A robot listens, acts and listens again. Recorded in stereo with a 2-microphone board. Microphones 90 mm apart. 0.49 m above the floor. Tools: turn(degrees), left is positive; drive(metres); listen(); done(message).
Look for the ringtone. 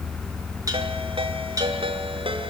turn(degrees=-90)
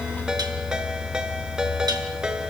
turn(degrees=-10)
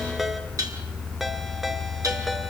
listen()
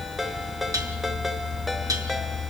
done("Facing the ringtone.")